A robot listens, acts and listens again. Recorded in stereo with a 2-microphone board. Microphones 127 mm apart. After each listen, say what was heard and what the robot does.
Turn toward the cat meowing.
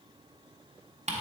Keep listening.
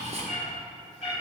The cat meowing: about 60° left or 120° left. Turn 60° left.
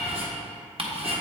So it is at 55° left. Turn 55° left.
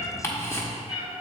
The cat meowing is now 10° right. Turn 10° right.
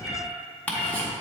Found it: a cat meowing, straight ahead.